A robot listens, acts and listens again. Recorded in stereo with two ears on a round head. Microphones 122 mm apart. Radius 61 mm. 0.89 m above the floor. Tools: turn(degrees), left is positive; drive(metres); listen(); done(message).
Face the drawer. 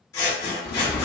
turn(degrees=70)
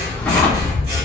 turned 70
listen()
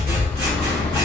listen()
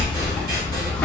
done("I heard a drawer, but can't make it out now. It was about straight ahead or 40° left.")